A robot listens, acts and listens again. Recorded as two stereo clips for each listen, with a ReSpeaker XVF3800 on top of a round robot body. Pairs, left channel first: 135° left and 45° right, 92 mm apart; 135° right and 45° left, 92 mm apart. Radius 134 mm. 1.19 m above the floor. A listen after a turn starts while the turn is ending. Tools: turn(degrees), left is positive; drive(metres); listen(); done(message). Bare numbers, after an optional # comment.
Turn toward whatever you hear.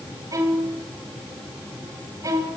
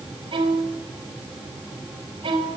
# The violin: 10° left.
turn(10)
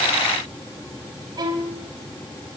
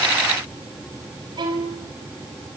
done("Facing the violin.")